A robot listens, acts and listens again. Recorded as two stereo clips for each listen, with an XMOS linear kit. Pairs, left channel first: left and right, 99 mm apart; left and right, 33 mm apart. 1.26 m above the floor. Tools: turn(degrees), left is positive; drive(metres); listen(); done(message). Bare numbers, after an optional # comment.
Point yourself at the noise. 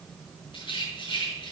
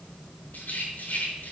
# The rattle: about 55° left or 125° left.
turn(55)
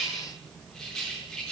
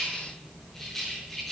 done("Found it: a rattle, straight ahead.")